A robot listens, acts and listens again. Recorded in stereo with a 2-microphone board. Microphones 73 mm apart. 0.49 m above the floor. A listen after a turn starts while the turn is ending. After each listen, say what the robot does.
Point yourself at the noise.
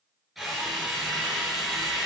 Turn 30° left.
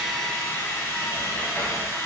Turn 155° left.
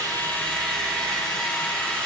Turn 15° left.
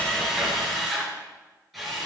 Found it: a drill, straight ahead.